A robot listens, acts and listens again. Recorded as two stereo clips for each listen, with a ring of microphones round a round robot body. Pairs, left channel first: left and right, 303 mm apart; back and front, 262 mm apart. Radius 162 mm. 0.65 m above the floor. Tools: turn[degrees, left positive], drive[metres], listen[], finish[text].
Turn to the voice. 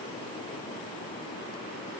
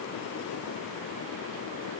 Action: listen[]
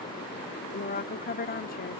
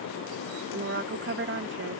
Thought: The woman speaking: 35° left.
Action: turn[35]
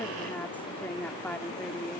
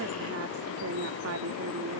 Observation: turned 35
Action: finish[Facing the woman speaking.]